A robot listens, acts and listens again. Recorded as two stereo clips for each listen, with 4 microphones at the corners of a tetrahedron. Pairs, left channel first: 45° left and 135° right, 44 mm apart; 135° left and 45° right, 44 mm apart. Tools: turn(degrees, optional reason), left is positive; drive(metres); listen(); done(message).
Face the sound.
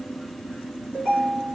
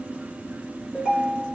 turn(degrees=-125, reason="The ringtone: 125° right.")
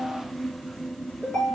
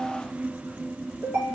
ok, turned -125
turn(degrees=-30, reason="The ringtone is now 30° right.")
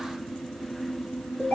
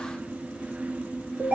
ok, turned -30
turn(degrees=-10, reason="The ringtone is now 10° right.")
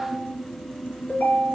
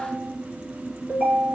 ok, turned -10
done("Found it: a ringtone, straight ahead.")